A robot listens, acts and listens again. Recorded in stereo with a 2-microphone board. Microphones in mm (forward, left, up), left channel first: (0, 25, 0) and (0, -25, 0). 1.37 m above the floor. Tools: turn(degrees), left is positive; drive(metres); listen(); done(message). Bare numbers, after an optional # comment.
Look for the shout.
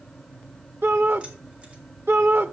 # The shout: about 60° right or 120° right.
turn(-60)
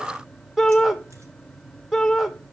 done("Facing the shout, 1 to 2 m away.")